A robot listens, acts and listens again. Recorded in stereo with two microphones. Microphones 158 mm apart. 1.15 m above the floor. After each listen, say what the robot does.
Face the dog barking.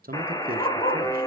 Turn 45° left.
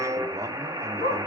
Turn 95° left.
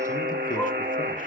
Keep listening.
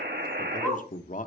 Facing the dog barking, over 4 m away.